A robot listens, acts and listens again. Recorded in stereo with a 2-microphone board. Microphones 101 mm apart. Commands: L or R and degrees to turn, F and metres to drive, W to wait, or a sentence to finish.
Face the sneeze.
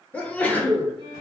L30
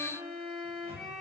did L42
W
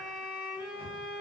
I heard a sneeze, but can't make it out now. It was about 30° right or 125° left.